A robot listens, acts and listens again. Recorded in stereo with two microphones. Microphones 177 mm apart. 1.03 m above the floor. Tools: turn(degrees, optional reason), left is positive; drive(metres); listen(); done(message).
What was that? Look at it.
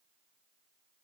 listen()
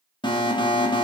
turn(degrees=25, reason="The alarm: about 25° left or 155° left.")
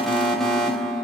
done("Found it: an alarm, straight ahead.")